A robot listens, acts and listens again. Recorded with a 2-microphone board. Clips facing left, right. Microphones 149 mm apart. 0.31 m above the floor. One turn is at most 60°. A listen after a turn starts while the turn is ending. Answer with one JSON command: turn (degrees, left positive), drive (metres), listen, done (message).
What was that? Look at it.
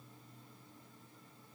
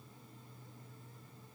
{"listen": true}
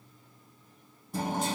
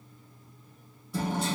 {"turn": 50}
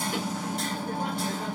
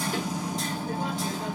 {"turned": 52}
{"turn": 60}
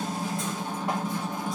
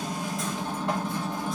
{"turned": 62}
{"turn": 10}
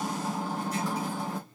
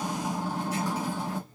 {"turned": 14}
{"done": "Found it: hammering, straight ahead."}